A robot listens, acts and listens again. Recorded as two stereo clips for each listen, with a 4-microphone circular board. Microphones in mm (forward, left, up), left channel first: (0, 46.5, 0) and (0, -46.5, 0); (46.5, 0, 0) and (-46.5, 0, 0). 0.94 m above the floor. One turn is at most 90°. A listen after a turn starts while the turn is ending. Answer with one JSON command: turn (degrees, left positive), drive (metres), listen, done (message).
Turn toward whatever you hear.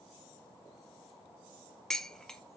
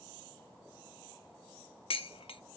{"done": "Found it: dishes clattering, straight ahead."}